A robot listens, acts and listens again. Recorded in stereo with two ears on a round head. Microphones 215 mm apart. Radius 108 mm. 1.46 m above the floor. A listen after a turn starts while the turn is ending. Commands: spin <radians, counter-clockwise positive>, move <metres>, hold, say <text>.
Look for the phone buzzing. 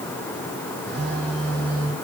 spin -0.87
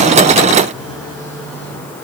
spin -1.40
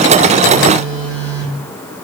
spin -0.52
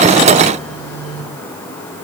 say Facing the phone buzzing.